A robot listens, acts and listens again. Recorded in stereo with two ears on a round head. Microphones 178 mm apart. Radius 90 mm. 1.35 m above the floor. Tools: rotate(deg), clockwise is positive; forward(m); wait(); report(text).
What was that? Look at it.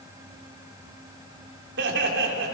rotate(65)
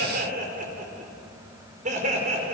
rotate(35)
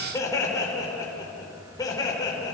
rotate(-20)
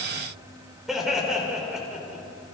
report("Found it: laughter, straight ahead.")